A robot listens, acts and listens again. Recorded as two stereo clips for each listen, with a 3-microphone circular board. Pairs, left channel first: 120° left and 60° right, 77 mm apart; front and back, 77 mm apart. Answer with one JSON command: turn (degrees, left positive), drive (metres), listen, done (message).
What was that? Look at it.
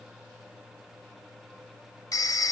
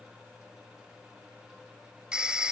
{"turn": 105}
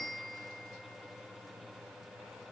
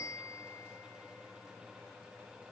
{"turn": 35}
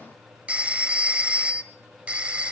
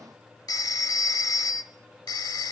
{"turn": 10}
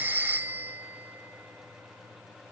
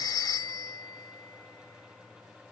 {"done": "Found it: a phone ringing, straight ahead."}